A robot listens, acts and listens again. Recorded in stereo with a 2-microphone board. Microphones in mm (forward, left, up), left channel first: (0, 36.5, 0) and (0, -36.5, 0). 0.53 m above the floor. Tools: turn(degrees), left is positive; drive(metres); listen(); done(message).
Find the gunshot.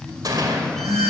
turn(degrees=-60)
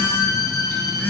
listen()
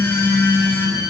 done("I heard a gunshot, but can't make it out now. It was about straight ahead or 60° right.")